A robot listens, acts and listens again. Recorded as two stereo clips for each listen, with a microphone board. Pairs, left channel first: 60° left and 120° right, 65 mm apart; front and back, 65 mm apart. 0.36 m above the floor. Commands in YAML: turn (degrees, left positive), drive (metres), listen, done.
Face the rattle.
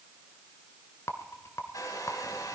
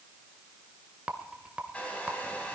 turn: 105
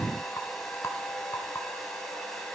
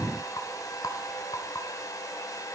turn: 15
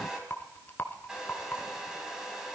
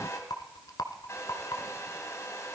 done: "Facing the rattle, 1 to 2 m away."